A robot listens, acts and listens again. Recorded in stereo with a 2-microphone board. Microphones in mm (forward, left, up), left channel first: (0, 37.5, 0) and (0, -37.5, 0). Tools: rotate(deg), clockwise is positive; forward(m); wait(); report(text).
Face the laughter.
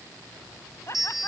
rotate(-40)
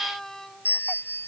report("Found it: laughter, straight ahead.")